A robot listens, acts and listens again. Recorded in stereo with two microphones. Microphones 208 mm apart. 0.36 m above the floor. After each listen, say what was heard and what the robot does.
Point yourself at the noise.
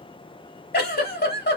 The giggle: about 50° left or 130° left. Turn 50° left.
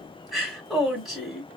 Facing the giggle, 1 to 2 m away.